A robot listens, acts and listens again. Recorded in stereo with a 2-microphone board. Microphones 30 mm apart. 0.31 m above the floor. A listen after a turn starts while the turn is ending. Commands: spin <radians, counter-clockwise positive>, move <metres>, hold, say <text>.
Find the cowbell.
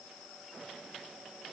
hold
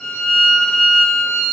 hold
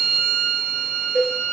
spin 1.57
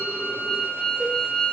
hold
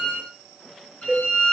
say Facing the cowbell, over 4 m away.